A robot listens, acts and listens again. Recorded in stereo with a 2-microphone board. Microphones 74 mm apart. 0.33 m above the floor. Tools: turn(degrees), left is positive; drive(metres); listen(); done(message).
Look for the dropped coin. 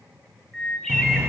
turn(degrees=-35)
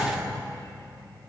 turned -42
listen()
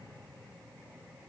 done("I heard a dropped coin, but can't make it out now. It was about 5° left or 100° right.")